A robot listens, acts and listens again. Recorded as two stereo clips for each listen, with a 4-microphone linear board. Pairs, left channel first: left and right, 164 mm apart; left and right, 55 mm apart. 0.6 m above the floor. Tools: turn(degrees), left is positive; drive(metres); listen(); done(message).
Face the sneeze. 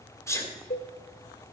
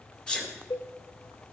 turn(degrees=15)
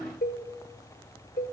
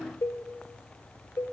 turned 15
listen()
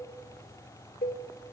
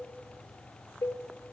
done("I heard a sneeze, but can't make it out now. It was about straight ahead or 150° left.")